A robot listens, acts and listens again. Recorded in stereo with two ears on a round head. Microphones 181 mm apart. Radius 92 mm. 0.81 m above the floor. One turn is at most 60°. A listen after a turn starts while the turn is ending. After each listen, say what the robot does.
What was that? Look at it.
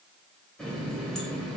Turn 30° left.
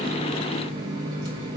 Turn 25° right.
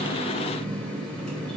Facing the running tap, 2 to 4 m away.